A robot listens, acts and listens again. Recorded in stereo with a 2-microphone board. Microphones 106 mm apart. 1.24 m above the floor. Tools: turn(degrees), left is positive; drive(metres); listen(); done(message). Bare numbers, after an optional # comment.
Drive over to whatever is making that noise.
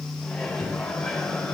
turn(30)
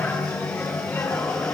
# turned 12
# So it is at 165° left.
turn(165)
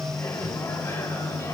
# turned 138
# The microwave is now 30° left.
turn(30)
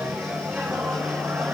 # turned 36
# The microwave is now 10° right.
turn(-10)
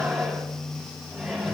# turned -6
drive(1.0)
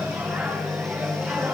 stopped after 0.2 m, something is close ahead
# The microwave is now 10° right.
turn(-10)
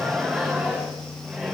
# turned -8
done("Blocked. The microwave is further on, straight ahead.")